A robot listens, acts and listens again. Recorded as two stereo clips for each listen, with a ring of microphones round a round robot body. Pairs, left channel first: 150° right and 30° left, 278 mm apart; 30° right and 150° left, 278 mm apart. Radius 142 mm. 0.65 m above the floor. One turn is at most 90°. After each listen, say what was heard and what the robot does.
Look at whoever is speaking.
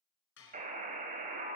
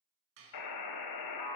Keep listening.
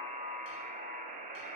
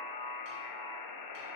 Keep listening.
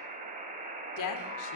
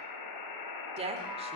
The woman speaking: 140° right. Turn 90° right.
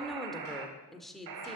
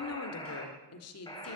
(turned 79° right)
The woman speaking is now 60° right. Turn 60° right.
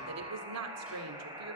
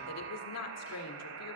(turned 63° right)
Found it: a woman speaking, straight ahead.